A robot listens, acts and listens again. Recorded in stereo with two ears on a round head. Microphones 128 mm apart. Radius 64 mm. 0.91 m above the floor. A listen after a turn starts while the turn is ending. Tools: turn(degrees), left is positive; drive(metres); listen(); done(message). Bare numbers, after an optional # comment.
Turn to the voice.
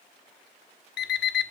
listen()
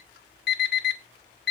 listen()
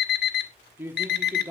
# The man speaking: about 15° right or 165° right.
turn(-15)
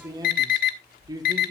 # So it is at 150° right.
turn(-150)
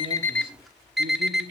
listen()
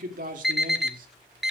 # The man speaking is now 70° right.
turn(-70)
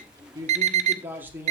# The man speaking is now 15° right.
turn(-15)
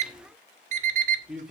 done("Facing the man speaking.")